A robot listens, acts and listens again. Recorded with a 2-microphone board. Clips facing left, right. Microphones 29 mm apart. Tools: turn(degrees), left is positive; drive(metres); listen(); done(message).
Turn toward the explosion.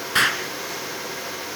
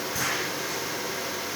turn(degrees=70)
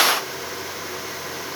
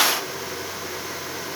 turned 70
listen()
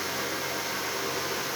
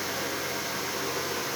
done("I heard an explosion, but can't make it out now. It was about straight ahead or 40° left.")